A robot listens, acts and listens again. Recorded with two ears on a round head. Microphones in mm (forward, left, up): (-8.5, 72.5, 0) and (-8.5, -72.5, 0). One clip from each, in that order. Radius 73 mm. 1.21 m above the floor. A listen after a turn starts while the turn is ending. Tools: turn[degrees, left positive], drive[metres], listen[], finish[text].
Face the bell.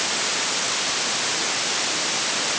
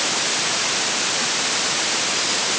Action: listen[]
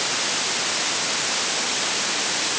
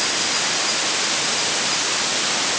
Action: listen[]
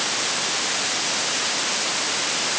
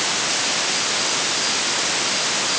Action: finish[I can't make out a bell to turn to.]